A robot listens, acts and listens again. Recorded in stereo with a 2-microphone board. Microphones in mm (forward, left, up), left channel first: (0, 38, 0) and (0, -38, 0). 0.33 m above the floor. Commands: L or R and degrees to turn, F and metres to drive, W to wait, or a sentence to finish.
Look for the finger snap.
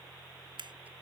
R90
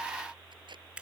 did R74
R15
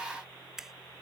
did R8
Facing the finger snap.